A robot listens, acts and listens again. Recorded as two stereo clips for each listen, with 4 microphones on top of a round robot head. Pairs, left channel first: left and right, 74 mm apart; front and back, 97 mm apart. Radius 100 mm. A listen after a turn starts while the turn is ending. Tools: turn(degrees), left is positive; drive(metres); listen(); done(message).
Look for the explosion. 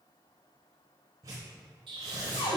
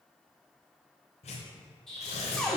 turn(degrees=-85)
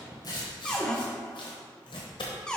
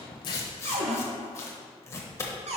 done("I heard an explosion from this way, but can't make it out now.")